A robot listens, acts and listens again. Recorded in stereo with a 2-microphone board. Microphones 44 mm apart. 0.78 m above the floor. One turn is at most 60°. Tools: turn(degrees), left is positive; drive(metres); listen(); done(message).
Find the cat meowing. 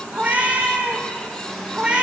turn(degrees=-20)
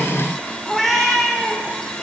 done("Facing the cat meowing.")